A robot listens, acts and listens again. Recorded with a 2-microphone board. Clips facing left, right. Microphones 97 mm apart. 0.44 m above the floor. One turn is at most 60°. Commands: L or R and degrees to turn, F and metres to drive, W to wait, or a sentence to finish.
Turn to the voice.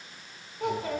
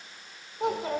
R20
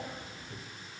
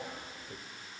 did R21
R60
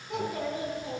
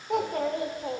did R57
R60
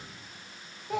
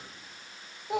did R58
R20
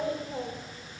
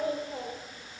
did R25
Found it: a child speaking, straight ahead, under 1 m away.